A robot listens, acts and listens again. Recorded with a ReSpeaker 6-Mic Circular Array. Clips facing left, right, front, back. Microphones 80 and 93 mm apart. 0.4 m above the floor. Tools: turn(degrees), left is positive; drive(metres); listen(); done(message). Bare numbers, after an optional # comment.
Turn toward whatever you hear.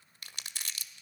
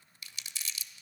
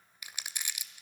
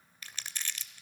# The crumpling: 75° left.
turn(75)
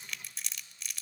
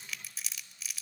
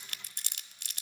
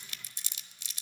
done("Facing the crumpling.")